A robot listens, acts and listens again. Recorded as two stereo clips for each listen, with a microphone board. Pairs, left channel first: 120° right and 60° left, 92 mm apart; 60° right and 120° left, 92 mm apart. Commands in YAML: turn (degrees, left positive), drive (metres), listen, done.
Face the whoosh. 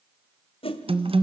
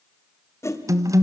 turn: -120
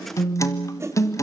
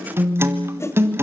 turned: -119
done: "Found it: a whoosh, straight ahead."